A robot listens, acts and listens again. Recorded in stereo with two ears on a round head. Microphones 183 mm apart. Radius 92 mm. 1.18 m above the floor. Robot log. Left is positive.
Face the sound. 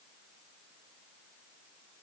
cmd idle
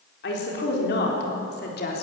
note: The woman speaking: about 50° left or 130° left.
cmd yaw +50
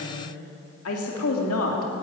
note: So it is at 80° left.
cmd yaw +80
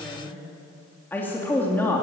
note: The woman speaking is now 10° left.
cmd yaw +10
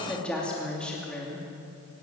end: Found it: a woman speaking, straight ahead, 2 to 4 m away.